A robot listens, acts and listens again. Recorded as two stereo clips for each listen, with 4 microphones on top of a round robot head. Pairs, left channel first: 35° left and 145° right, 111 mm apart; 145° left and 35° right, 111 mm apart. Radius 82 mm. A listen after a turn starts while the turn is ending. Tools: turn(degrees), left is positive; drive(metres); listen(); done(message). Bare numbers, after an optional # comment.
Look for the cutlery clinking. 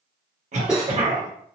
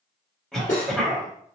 # The cutlery clinking: 130° left.
turn(130)
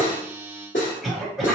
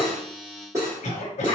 # The cutlery clinking is now 25° left.
turn(25)
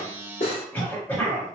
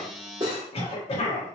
# The cutlery clinking is now 10° left.
turn(10)
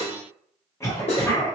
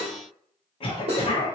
done("Facing the cutlery clinking, 1 to 2 m away.")